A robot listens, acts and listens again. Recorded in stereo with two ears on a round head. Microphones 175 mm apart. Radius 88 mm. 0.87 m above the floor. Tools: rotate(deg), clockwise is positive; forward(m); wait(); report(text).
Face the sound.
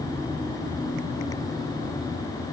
wait()
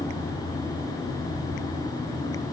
wait()
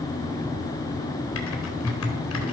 rotate(-90)
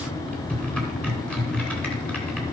report("Found it: typing on a keyboard, straight ahead.")